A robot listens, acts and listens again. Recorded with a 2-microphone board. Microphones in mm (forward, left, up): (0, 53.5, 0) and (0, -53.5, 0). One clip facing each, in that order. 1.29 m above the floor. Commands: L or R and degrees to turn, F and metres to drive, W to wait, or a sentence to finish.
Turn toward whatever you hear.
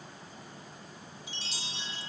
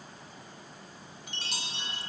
R60
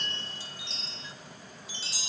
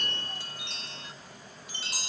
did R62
R55
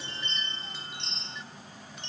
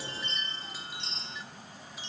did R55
Facing the chime, under 1 m away.